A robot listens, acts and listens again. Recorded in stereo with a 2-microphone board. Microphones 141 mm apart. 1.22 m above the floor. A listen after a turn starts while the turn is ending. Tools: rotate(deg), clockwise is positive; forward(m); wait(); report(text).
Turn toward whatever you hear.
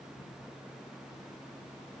wait()
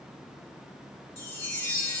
rotate(-30)
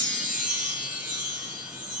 rotate(15)
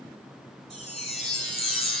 report("Found it: a chime, straight ahead.")